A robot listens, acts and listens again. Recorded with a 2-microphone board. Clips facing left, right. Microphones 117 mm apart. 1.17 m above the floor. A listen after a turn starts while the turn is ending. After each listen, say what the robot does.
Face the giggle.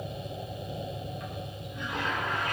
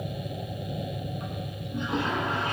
Keep listening.
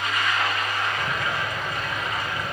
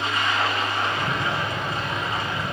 Keep listening.
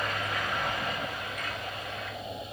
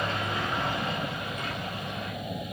I can't make out a giggle to turn to.